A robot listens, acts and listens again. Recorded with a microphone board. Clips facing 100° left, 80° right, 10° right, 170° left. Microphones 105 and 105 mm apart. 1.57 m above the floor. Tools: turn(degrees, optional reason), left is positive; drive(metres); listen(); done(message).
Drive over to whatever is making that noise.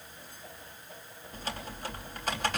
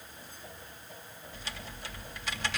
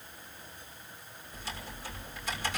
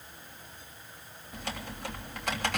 turn(degrees=145, reason="The typing on a keyboard: 145° left.")
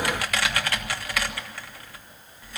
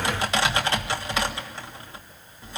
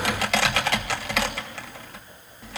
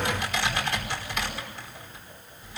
turn(degrees=-15, reason="The typing on a keyboard is now 15° right.")
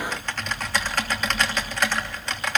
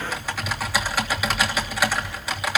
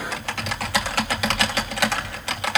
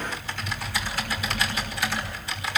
drive(metres=1.0)
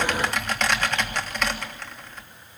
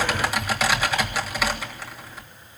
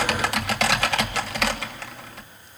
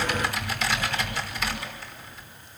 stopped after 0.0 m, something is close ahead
done("Something is in my way. I am facing the typing on a keyboard but have not reached it.")